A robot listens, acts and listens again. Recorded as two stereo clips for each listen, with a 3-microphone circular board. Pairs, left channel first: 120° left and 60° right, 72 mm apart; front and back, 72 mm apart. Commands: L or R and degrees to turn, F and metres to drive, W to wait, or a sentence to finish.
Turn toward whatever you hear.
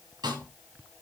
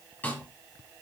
R70
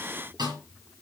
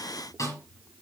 R40
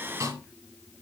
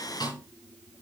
R20
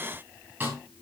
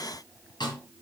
Found it: a snare drum, straight ahead.